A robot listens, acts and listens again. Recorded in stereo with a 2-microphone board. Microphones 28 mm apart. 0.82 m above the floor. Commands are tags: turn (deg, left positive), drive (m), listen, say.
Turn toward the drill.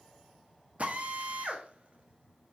<turn deg="-55"/>
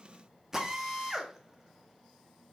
<turn deg="-20"/>
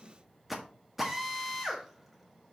<say>Found it: a drill, straight ahead.</say>